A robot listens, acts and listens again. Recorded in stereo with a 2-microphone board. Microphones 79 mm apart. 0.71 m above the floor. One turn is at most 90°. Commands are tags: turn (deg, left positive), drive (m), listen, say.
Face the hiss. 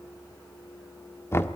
<listen/>
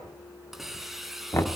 <turn deg="30"/>
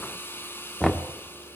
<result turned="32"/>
<turn deg="90"/>
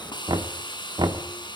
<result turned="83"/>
<turn deg="70"/>
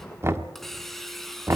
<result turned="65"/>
<say>Facing the hiss.</say>